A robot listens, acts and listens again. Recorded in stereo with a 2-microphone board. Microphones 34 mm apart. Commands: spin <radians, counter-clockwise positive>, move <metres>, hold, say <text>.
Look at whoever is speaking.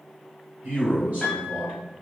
spin -0.70
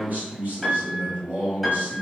spin -1.57
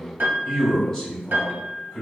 spin 0.17
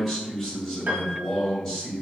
say Found it: a man speaking, straight ahead.